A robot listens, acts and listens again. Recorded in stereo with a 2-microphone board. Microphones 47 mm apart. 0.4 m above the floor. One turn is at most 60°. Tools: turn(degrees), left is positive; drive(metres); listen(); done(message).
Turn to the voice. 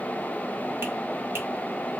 listen()
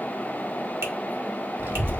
turn(degrees=-55)
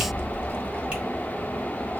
turn(degrees=-60)
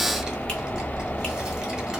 turn(degrees=-15)
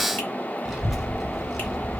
done("Found it: a child speaking, straight ahead, 1 to 2 m away.")